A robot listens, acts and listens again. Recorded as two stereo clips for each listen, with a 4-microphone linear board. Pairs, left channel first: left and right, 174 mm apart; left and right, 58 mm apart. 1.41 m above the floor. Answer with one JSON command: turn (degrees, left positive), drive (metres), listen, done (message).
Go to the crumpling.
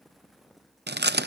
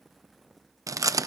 {"listen": true}
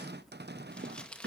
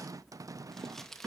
{"turn": 30}
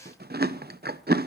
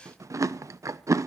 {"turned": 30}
{"listen": true}
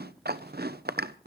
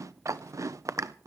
{"listen": true}
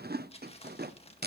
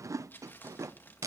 {"turn": 145}
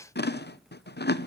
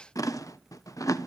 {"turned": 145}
{"listen": true}
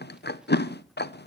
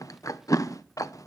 {"listen": true}
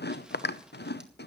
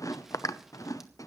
{"done": "I heard crumpling from this way, but can't make it out now. I did not reach it."}